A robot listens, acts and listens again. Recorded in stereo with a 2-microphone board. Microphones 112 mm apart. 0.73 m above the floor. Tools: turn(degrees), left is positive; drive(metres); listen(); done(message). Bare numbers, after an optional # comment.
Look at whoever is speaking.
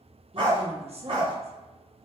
# The woman speaking: about 60° right or 120° right.
turn(-60)
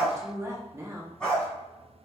# So it is at 25° right.
turn(-25)
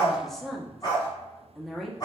done("Facing the woman speaking.")